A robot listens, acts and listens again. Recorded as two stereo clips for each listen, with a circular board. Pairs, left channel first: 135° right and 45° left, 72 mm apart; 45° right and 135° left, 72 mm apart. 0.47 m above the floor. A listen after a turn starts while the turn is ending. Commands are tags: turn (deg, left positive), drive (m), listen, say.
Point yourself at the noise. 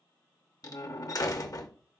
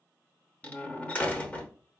<turn deg="-110"/>
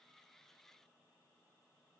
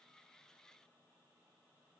<say>I heard a door slam from this way, but can't make it out now.</say>